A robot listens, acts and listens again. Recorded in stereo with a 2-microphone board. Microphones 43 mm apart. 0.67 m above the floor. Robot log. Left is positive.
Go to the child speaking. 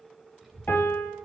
cmd yaw +30
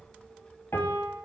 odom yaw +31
note: So it is at 150° left.
cmd yaw +150
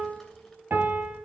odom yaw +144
cmd fwd 1.0
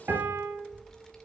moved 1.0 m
note: The child speaking is now 10° left.
cmd yaw +10
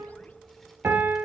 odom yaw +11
cmd fwd 1.0
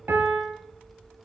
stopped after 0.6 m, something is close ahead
end: I am next to the child speaking.